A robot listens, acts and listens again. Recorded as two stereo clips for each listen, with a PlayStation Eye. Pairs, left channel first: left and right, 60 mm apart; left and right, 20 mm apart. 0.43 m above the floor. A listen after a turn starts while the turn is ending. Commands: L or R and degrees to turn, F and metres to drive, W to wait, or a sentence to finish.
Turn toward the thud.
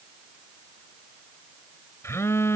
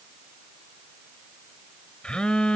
W
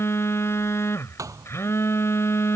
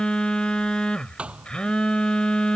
R65
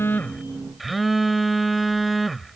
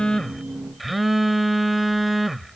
W
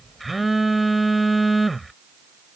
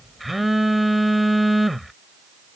I heard a thud, but can't make it out now. It was about straight ahead or 50° right.